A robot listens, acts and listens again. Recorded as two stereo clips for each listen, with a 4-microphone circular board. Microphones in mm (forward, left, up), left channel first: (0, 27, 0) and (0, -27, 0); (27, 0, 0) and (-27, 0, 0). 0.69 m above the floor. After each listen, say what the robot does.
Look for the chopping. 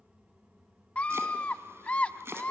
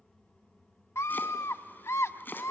Turn 50° right.
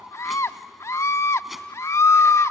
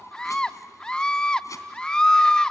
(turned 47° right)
Keep listening.
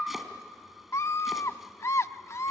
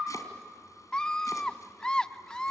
Keep listening.
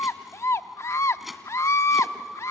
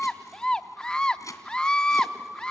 Facing the chopping, 2 to 4 m away.